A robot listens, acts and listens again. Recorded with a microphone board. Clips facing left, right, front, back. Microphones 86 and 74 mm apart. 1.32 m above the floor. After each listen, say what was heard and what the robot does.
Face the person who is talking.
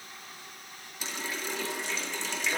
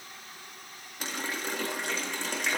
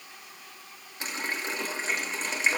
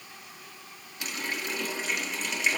Keep listening.
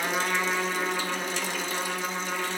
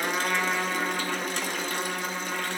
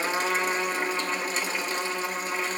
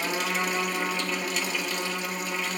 Keep listening.
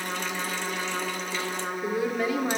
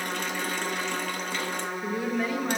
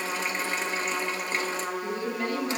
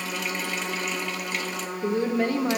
The woman speaking: straight behind. Turn 180° left.
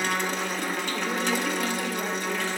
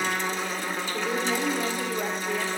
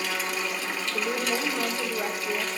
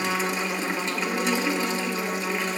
Keep listening.
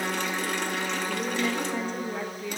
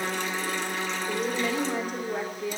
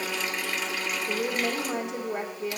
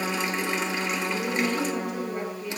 The woman speaking is now 10° right. Turn 10° right.
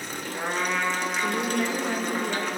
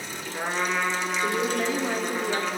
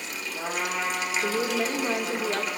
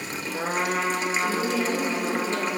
Found it: a woman speaking, straight ahead.